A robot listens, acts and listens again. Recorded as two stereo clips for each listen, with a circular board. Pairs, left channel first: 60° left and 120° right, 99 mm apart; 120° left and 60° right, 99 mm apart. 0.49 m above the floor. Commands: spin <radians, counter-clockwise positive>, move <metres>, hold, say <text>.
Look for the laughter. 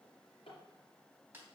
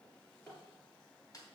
hold
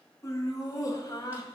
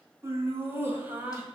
spin 0.17
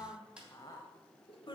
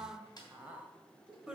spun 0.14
spin 0.35
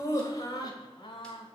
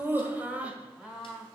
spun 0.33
spin 0.44
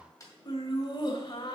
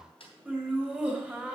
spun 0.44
spin 0.26
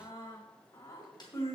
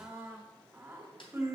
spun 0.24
say Found it: laughter, straight ahead.